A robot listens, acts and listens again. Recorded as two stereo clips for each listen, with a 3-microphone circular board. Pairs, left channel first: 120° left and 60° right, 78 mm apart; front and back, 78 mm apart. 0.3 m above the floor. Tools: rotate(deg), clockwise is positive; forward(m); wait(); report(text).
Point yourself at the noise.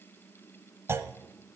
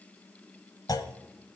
rotate(15)
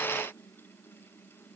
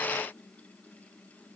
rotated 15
report("I heard a clunk from this way, but can't make it out now.")